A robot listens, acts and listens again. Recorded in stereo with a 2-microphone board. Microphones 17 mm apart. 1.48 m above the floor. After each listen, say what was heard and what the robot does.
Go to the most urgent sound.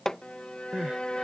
Turn 90° right.
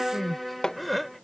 Drive 1.0 m forward.
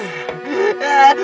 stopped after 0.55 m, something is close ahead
Blocked. The crying is further on, straight ahead.